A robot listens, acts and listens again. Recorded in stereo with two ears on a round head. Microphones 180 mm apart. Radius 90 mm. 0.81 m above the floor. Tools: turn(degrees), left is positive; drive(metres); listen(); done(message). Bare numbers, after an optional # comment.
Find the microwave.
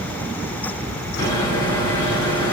# The microwave: about 20° left or 160° left.
turn(20)
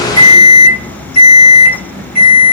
# So it is at 135° left.
turn(135)
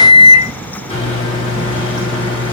# The microwave is now 30° left.
turn(30)
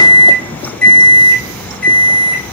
done("Facing the microwave.")